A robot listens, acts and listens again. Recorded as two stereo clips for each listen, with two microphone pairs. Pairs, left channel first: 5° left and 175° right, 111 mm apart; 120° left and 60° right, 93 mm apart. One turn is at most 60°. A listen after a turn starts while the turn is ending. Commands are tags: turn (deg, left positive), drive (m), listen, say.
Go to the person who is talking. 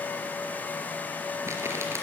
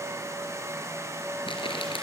<listen/>
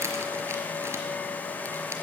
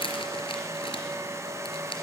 <listen/>
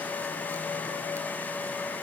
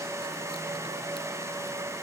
<say>I can't make out anyone speaking, only crumpling.</say>